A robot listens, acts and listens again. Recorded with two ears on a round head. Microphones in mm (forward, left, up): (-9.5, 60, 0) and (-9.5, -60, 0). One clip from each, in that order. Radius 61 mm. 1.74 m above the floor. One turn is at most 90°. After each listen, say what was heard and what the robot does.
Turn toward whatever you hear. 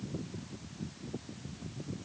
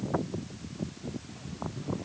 Keep listening.
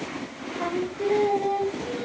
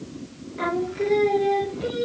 The singing: about 65° right or 115° right. Turn 65° right.
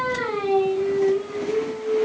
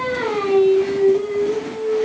So it is at 25° right. Turn 25° right.
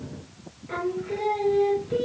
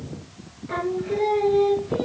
Found it: singing, straight ahead.